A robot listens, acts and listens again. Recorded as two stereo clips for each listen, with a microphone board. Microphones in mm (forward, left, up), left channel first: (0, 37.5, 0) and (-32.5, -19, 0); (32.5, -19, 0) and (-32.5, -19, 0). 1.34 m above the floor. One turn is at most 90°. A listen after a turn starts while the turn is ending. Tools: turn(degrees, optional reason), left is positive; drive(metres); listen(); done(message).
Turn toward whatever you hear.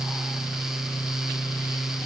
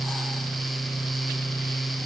listen()
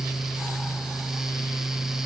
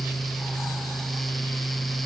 listen()
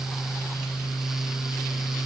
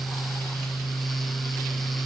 done("I can't make out anything.")